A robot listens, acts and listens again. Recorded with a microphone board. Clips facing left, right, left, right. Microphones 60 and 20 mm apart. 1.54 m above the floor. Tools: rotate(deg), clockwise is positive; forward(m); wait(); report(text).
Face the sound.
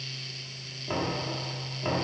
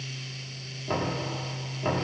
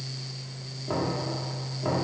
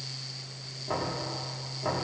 rotate(30)
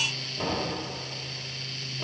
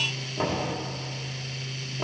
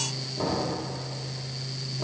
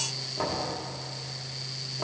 rotate(140)
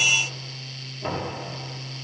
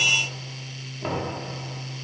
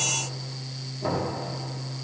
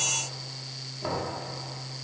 rotate(10)
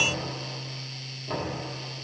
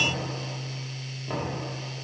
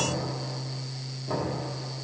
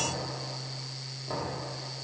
report("Found it: knocking, straight ahead.")